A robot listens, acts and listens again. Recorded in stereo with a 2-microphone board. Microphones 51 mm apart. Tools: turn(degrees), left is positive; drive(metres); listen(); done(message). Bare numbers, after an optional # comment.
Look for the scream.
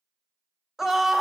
turn(-30)
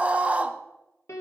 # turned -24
# So it is at 150° right.
turn(-150)
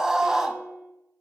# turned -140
# The scream is now 10° right.
turn(-10)
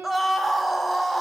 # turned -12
done("Facing the scream.")